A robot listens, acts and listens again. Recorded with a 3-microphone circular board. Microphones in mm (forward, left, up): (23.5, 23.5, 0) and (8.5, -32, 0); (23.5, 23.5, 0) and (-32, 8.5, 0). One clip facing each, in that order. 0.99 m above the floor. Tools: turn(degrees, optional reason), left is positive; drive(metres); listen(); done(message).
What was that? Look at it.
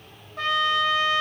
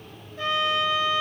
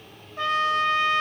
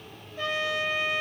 turn(degrees=55, reason="The trumpet: 55° left.")
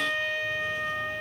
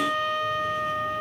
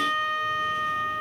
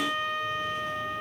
turn(degrees=10, reason="The trumpet is now 10° left.")
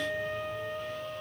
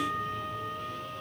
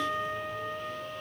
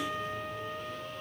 done("Found it: a trumpet, straight ahead.")